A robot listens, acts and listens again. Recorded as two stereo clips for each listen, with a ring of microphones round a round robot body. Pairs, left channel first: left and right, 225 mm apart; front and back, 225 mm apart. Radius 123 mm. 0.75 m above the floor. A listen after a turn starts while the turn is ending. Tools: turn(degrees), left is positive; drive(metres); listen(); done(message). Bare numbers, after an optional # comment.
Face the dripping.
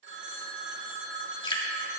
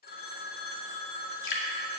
# The dripping: 25° left.
turn(25)
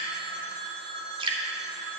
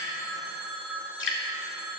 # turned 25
# The dripping is now 25° right.
turn(-25)
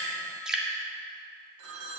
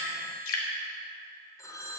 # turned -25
done("Facing the dripping, 2 to 4 m away.")